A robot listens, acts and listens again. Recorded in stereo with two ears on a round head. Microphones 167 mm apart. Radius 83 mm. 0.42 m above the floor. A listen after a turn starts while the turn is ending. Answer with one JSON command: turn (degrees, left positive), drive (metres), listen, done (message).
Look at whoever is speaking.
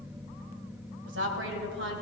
{"turn": -70}
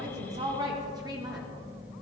{"turn": -25}
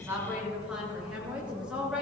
{"done": "Facing the woman speaking."}